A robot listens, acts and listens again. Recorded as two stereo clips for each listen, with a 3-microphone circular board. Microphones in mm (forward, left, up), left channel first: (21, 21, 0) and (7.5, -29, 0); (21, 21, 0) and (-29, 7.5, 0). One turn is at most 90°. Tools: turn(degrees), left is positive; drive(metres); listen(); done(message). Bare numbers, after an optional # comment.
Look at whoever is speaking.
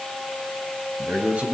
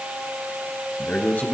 # The man speaking: 40° right.
turn(-40)
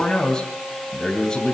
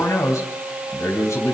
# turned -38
done("Found it: a man speaking, straight ahead, 2 to 4 m away.")